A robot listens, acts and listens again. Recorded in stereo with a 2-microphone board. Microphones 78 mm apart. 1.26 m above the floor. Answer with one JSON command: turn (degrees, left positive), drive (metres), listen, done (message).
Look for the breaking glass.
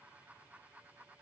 {"listen": true}
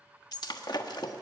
{"turn": 60}
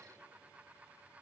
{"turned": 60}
{"listen": true}
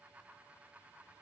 {"done": "I heard breaking glass, but can't make it out now. It was about straight ahead or 60° left."}